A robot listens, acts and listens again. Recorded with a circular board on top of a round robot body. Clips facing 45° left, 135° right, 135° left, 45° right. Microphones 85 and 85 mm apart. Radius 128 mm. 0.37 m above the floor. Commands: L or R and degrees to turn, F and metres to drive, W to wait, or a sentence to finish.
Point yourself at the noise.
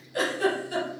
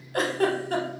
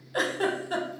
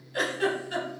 R175
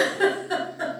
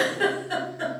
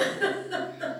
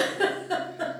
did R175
R35
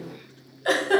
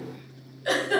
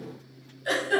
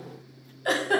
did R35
Found it: a giggle, straight ahead, under 1 m away.